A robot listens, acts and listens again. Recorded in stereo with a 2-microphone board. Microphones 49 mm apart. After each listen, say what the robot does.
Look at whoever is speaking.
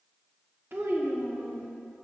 Turn 55° right.
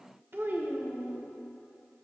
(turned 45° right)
Turn 65° right.
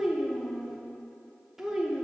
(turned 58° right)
Turn 10° right.
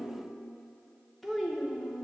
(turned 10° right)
Found it: a child speaking, straight ahead.